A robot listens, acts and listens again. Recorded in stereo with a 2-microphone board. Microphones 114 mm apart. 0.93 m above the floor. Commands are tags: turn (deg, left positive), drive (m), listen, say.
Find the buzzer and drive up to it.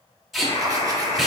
<turn deg="65"/>
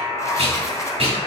<turn deg="45"/>
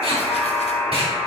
<drive m="1.0"/>
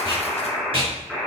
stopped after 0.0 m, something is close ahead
<say>Something is in my way. I am facing the buzzer but have not reached it.</say>